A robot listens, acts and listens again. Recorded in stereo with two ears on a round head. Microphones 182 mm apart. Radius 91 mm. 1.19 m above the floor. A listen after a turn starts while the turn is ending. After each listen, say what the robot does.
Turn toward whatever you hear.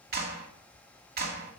Turn 50° right.
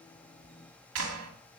Turn 80° right.
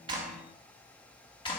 Turn 25° left.
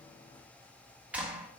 Found it: a clap, straight ahead.